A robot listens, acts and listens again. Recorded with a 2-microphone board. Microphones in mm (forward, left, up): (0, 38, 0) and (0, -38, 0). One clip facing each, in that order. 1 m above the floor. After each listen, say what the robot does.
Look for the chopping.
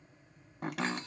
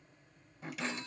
Turn 65° left.
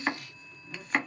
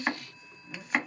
Found it: chopping, straight ahead, under 1 m away.